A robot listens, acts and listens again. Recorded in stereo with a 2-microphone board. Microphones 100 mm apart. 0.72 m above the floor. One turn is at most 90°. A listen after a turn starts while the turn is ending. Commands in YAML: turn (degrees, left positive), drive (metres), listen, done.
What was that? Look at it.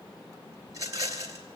turn: -35
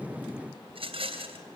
turn: -90
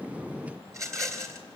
turn: -35
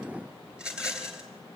turn: -10
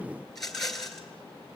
done: "Found it: a rattle, straight ahead."